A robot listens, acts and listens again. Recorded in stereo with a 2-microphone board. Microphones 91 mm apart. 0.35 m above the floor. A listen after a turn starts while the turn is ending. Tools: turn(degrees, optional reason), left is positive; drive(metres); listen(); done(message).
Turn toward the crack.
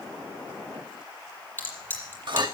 turn(degrees=20, reason="The crack: about 20° left or 160° left.")
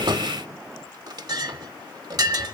listen()
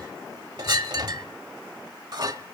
done("I heard a crack, but can't make it out now. It was about straight ahead or 140° left.")